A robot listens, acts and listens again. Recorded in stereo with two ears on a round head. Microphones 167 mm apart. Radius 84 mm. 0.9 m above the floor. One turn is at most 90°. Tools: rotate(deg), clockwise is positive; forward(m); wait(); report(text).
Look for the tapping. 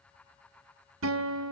wait()
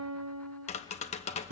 rotate(-35)
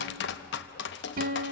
rotate(-90)
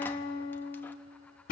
rotate(-15)
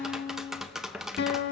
report("Found it: tapping, straight ahead.")